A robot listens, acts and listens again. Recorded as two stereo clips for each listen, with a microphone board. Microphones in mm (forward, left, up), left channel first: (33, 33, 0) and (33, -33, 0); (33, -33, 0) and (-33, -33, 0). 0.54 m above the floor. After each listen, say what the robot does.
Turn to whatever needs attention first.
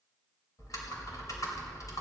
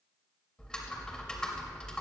Keep listening.
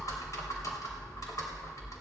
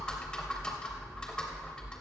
Keep listening.
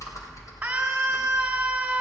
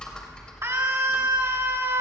Turn 160° right.
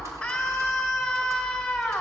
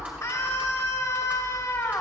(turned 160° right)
Turn 10° left.
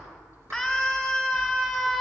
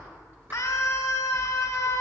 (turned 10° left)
Facing the scream.